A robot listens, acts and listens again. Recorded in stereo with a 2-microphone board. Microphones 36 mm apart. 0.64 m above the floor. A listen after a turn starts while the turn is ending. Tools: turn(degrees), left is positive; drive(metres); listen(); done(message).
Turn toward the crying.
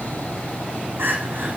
turn(degrees=-90)
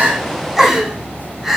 done("Found it: crying, straight ahead.")